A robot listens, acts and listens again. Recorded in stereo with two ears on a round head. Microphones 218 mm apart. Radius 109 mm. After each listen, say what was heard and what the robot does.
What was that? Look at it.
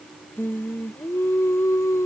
Turn 30° left.
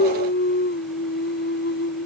So it is at 130° left. Turn 130° left.
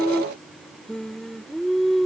Found it: singing, straight ahead.